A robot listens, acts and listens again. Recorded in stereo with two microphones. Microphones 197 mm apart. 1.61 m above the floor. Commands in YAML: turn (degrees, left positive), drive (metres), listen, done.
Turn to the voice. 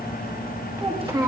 turn: -20
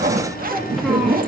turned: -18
listen: true
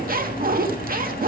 listen: true
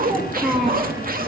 done: "Found it: a child speaking, straight ahead."